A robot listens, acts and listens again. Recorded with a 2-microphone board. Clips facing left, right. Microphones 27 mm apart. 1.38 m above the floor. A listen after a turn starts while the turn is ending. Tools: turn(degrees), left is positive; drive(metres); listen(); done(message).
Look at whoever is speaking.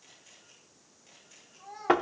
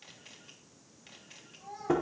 turn(degrees=30)
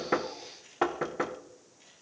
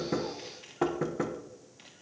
listen()
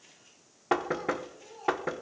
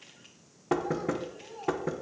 turn(degrees=-20)
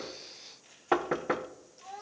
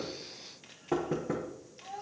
done("Found it: a child speaking, straight ahead, over 4 m away.")